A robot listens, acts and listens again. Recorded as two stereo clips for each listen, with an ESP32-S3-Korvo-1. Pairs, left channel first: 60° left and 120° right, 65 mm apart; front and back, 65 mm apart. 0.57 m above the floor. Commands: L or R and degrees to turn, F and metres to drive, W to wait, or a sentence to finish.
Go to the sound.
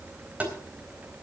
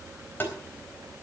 R55
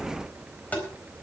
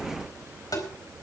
F1.0
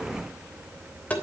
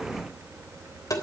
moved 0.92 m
F1.0
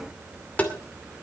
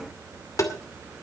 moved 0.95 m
F1.0
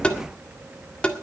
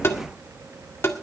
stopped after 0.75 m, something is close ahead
I am next to the tapping.